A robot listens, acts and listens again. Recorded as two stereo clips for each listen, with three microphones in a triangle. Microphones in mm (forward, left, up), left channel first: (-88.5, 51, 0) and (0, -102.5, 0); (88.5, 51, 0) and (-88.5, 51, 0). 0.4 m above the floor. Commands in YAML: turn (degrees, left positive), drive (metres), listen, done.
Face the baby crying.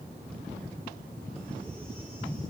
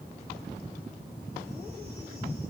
listen: true
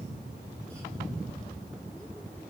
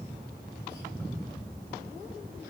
listen: true
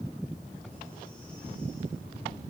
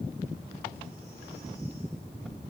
done: "I can't make out a baby crying."